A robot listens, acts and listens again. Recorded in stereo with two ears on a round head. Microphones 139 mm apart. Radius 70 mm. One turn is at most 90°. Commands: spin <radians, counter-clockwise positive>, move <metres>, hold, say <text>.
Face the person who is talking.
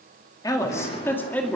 spin 0.52
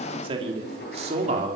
spin -0.79
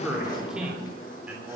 spin -0.17
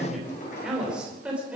spin -0.17
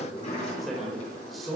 say Found it: a man speaking, straight ahead, over 4 m away.